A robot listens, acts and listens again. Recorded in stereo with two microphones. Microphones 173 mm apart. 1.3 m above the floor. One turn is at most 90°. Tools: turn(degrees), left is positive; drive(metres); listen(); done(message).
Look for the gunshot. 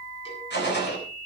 turn(degrees=90)
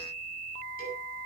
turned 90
done("I heard a gunshot from this way, but can't make it out now.")